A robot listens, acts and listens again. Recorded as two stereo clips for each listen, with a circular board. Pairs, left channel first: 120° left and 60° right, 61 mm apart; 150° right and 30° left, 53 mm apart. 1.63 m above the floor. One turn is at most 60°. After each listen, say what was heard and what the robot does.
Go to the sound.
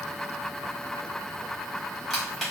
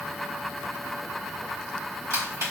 The crushing: 30° left. Turn 30° left.
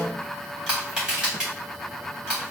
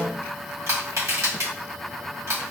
The crushing is now 15° left. Turn 15° left.
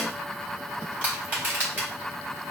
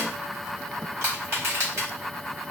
Drive 1.0 m forward.
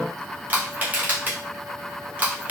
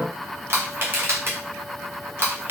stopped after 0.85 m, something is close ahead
I am next to the crushing.